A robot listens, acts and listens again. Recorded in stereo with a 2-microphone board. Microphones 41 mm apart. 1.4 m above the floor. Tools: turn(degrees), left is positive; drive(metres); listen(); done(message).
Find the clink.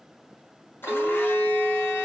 turn(degrees=-45)
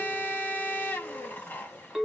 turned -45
turn(degrees=-10)
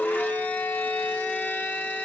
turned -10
done("Found it: a clink, straight ahead.")